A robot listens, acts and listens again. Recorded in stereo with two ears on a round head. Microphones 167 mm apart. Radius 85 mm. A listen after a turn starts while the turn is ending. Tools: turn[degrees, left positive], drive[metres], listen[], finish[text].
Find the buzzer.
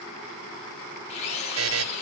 Action: turn[-90]
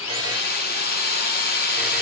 Action: listen[]
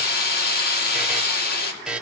Action: finish[Found it: a buzzer, straight ahead.]